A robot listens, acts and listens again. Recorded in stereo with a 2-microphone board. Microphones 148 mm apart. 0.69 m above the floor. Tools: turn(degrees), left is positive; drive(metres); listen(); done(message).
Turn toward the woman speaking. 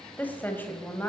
turn(degrees=30)
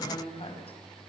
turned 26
turn(degrees=140)
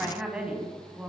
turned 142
turn(degrees=-10)
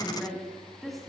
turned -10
done("Facing the woman speaking.")